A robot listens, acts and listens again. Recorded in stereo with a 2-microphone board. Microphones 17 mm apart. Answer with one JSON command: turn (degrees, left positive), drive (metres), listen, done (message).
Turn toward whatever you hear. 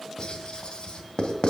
{"turn": 55}
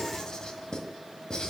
{"turn": 55}
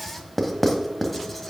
{"turn": 15}
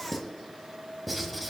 {"done": "Found it: writing, straight ahead."}